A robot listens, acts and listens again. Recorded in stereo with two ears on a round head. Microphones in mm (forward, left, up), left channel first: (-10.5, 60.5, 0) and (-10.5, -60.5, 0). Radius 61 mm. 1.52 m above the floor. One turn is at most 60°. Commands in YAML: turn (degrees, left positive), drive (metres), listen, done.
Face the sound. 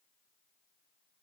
listen: true
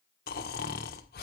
turn: 60
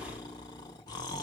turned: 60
turn: 30
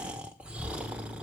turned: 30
turn: -10
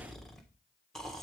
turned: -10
done: "Found it: snoring, straight ahead, 1 to 2 m away."